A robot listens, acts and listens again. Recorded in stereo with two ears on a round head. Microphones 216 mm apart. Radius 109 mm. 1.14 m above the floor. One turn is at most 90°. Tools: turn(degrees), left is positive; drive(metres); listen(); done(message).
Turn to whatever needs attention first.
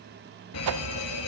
turn(degrees=65)
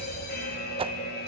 turn(degrees=40)
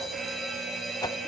done("Facing the fire alarm, 2 to 4 m away.")